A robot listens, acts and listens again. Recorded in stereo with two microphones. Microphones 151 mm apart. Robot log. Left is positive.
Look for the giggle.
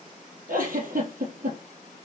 note: The giggle: about 75° right or 105° right.
cmd yaw -75
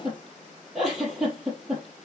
end: Facing the giggle, over 4 m away.